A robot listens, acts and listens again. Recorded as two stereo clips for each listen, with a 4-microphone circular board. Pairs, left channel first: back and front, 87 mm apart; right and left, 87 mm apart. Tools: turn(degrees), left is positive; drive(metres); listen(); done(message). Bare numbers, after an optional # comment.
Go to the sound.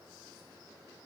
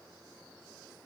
listen()
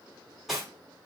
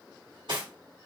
# The cutlery clinking: 90° left.
turn(90)
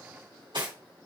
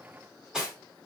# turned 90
# The cutlery clinking is now 10° left.
turn(10)
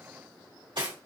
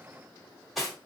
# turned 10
drive(1.0)
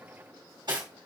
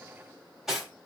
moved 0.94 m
drive(1.0)
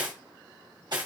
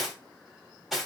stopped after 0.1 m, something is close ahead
done("Arrived at the cutlery clinking, straight ahead.")